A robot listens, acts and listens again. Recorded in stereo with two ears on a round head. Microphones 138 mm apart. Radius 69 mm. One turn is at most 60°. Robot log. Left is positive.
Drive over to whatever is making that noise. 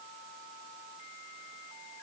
cmd idle
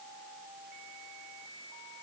cmd idle
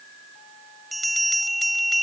cmd yaw +30
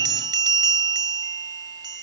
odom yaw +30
note: So it is at 30° right.
cmd yaw -30
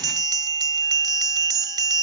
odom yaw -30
note: The bell is now 25° right.
cmd yaw -25
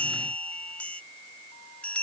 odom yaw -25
note: The bell is now 10° left.
cmd yaw +10
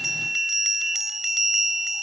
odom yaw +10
cmd fwd 1.0
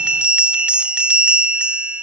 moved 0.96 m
note: The bell is now 10° right.
cmd yaw -10
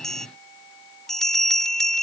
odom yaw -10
cmd fwd 1.0
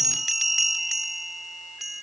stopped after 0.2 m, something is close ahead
end: Arrived at the bell, straight ahead.